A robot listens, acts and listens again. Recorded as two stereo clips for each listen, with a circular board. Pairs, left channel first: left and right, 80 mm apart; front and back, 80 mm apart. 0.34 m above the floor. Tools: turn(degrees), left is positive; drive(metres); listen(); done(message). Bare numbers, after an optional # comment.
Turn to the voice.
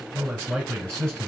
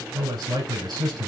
# The man speaking: 175° left.
turn(175)
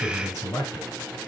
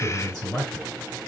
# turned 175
# The man speaking is now 40° left.
turn(40)
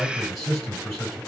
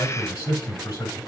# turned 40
done("Found it: a man speaking, straight ahead, 2 to 4 m away.")